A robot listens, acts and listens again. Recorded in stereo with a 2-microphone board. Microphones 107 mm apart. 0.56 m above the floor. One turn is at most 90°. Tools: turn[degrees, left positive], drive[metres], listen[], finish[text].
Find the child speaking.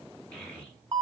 Action: turn[30]
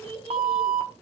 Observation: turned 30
Thought: So it is at 135° left.
Action: turn[90]
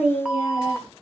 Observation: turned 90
Thought: The child speaking is now 45° left.
Action: turn[45]
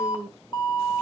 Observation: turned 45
Action: finish[Facing the child speaking.]